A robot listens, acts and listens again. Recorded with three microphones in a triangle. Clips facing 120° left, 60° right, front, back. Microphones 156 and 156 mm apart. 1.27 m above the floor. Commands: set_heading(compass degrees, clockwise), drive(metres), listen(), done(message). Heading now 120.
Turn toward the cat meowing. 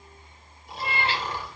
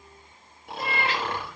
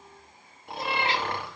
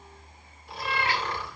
set_heading(55)
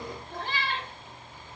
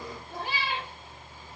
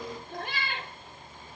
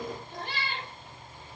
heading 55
set_heading(35)
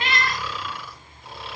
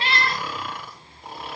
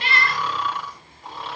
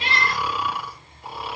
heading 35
done("Found it: a cat meowing, straight ahead, 2 to 4 m away.")